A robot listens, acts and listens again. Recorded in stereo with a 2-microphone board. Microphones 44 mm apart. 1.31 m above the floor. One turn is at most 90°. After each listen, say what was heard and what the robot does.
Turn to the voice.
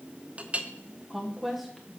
Turn 30° left.
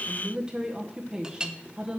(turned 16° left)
So it is at 15° right. Turn 15° right.
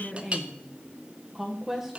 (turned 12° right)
Facing the woman speaking.